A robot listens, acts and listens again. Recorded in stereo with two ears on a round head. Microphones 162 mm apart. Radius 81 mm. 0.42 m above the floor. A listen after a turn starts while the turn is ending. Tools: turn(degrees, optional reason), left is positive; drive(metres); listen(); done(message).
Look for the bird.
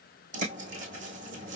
turn(degrees=-45, reason="The bird: about 45° right or 135° right.")
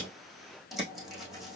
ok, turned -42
done("Facing the bird.")